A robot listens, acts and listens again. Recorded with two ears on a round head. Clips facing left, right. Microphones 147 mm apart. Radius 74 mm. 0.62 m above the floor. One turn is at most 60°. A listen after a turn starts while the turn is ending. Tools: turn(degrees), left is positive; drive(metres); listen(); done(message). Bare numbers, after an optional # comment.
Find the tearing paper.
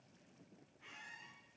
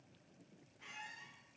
listen()
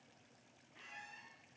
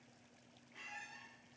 listen()
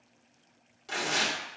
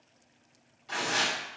# The tearing paper: about 55° left or 125° left.
turn(55)
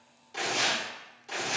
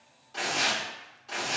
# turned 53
# So it is at 20° left.
turn(20)
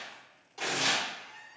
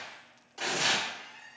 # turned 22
done("Found it: tearing paper, straight ahead.")